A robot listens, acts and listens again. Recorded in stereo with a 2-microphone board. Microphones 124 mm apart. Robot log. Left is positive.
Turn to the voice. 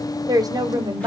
note: The woman speaking: about 30° right or 150° right.
cmd yaw -30
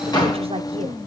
note: So it is at 115° right.
cmd yaw -115
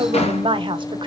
note: The woman speaking is now 50° right.
cmd yaw -50
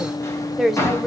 end: Found it: a woman speaking, straight ahead, under 1 m away.